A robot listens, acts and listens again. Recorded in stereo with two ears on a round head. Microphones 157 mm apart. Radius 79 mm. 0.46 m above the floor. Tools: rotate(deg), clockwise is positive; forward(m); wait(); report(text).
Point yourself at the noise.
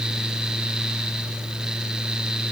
wait()
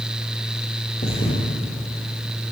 rotate(-35)
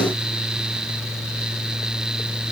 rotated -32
wait()
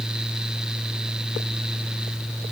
report("I heard a thud, but can't make it out now. It was about 5° left or 110° left.")